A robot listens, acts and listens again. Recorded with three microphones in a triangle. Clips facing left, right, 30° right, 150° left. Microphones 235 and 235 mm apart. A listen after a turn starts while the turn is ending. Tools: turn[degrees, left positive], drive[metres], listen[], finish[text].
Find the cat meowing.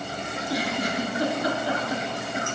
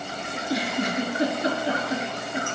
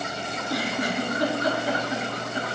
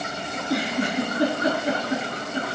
Action: listen[]
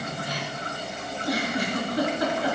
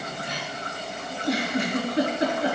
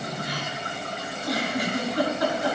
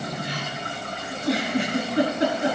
Action: listen[]
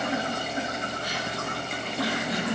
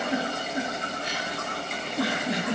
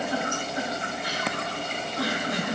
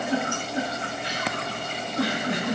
Action: finish[I can't make out a cat meowing, only a giggle.]